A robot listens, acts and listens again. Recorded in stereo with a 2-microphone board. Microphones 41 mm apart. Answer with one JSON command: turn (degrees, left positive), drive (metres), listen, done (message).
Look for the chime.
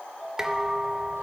{"turn": -30}
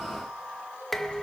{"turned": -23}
{"listen": true}
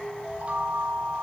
{"turn": -150}
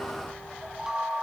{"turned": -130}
{"turn": -15}
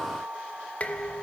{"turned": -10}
{"turn": -10}
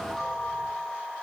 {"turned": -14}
{"done": "Found it: a chime, straight ahead."}